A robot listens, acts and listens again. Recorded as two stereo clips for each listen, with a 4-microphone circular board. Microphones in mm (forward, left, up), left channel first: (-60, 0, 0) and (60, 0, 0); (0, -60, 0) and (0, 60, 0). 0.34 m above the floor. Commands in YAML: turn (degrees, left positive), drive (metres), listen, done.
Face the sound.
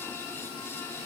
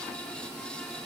listen: true
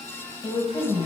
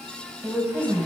turn: 160
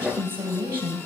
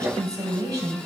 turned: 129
turn: 35
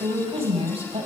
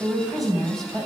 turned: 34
done: "Facing the woman speaking, 2 to 4 m away."